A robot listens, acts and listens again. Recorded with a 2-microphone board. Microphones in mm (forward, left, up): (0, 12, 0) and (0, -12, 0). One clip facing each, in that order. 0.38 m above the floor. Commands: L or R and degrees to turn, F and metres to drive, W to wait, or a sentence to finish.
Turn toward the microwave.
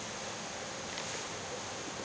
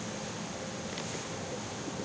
W
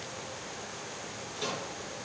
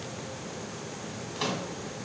R70
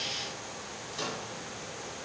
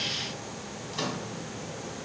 R30
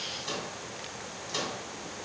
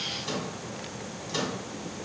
Found it: a microwave, straight ahead, 2 to 4 m away.